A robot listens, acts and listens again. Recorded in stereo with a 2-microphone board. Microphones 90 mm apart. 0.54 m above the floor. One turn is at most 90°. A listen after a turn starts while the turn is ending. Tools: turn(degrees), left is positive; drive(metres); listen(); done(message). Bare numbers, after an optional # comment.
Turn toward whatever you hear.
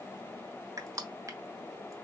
# The crushing: about 35° right or 145° right.
turn(-35)
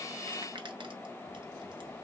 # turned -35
listen()
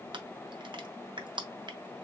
# So it is at 100° right.
turn(-90)
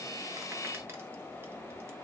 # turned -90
# Nothing new. It was at 10° right.
turn(-10)
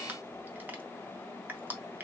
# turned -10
# The crushing is now 25° right.
turn(-25)
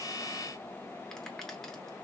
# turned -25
listen()
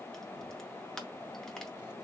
done("Facing the crushing, under 1 m away.")